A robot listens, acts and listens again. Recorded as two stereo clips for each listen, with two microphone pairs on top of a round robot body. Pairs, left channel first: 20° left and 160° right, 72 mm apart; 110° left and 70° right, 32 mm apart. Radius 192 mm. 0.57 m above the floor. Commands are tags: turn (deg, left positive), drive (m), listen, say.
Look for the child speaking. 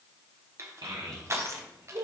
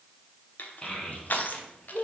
<turn deg="165"/>
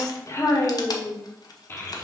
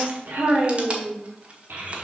<turn deg="-45"/>
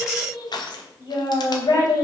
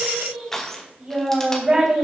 <say>Found it: a child speaking, straight ahead, 2 to 4 m away.</say>